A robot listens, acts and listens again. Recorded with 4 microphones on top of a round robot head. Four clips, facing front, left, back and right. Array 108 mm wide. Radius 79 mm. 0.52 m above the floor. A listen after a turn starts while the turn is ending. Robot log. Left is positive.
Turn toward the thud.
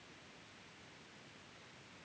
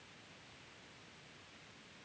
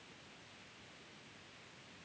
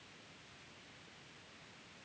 cmd idle
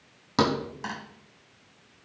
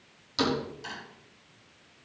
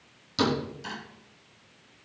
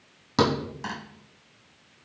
note: The thud: 40° right.
cmd yaw -40
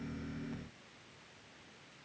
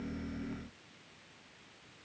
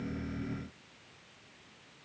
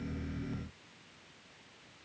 end: Facing where the thud came from. I can't hear it now.